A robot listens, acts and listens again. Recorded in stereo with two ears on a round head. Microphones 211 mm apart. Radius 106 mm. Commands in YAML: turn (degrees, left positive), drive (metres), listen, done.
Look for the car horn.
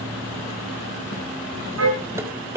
turn: -55
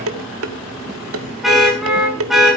done: "Facing the car horn, over 4 m away."